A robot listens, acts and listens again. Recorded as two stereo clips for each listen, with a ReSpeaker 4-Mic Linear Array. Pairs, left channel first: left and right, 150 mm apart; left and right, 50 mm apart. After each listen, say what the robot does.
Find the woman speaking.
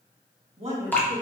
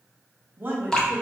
Turn 40° right.
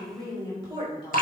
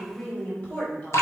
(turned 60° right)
Turn 35° left.
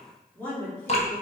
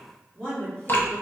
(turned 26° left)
Turn 15° left.
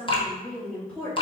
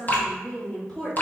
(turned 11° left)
Turn 10° left.
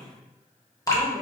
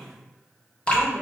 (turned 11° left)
Found it: a woman speaking, straight ahead, 2 to 4 m away.